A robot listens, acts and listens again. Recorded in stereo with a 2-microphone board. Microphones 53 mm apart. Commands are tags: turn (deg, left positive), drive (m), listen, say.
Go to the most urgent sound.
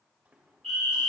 <turn deg="30"/>
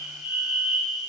<turn deg="-25"/>
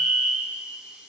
<drive m="1.0"/>
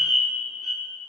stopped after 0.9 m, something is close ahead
<say>I am next to the fire alarm.</say>